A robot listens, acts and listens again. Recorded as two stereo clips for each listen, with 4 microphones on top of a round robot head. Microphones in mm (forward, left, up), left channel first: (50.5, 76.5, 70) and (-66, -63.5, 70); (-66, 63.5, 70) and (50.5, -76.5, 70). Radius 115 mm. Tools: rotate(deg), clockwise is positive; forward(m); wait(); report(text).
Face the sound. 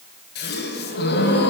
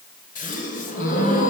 rotate(-80)
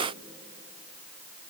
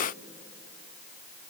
report("Facing where the gasp came from. I can't hear it now.")